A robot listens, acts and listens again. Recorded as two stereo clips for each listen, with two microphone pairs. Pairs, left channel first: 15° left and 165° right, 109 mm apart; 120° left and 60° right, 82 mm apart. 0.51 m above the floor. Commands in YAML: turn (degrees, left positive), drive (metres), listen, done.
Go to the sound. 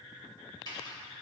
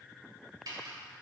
turn: -30
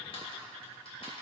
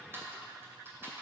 drive: 1.0
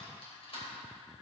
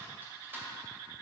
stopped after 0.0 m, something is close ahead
done: "Something is in my way. I am facing the typing on a keyboard but have not reached it."